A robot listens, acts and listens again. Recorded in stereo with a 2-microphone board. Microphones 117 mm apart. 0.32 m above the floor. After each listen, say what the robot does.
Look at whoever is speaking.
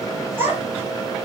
Turn 20° right.
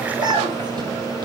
Turn 35° right.
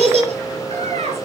Turn 115° right.
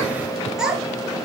Facing the child speaking.